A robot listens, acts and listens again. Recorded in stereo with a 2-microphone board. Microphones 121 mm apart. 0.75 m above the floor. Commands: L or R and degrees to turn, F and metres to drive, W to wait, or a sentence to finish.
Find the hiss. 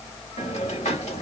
L90
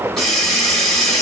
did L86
Found it: a hiss, straight ahead.